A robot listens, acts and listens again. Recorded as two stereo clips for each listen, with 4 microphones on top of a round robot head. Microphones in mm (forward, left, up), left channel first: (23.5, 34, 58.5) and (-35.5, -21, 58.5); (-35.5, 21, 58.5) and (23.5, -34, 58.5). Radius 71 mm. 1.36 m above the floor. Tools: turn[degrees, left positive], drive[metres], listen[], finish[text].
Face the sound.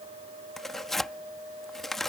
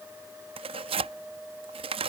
Thought: The tearing paper: 45° right.
Action: turn[-45]
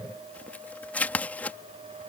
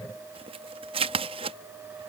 Thought: The tearing paper is now 30° right.
Action: turn[-30]
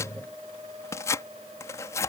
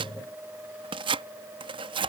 Thought: The tearing paper is now 15° right.
Action: turn[-15]
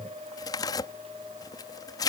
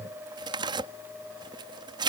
Action: finish[Facing the tearing paper.]